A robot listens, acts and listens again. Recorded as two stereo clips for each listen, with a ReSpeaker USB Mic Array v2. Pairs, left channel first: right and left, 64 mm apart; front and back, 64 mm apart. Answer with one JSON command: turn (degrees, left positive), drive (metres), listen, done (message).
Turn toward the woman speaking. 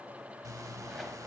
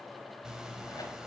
{"listen": true}
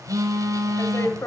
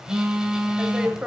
{"turn": -110}
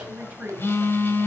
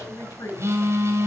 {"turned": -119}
{"turn": 25}
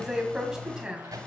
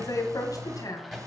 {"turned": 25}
{"turn": 10}
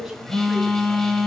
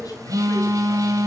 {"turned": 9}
{"done": "Found it: a woman speaking, straight ahead."}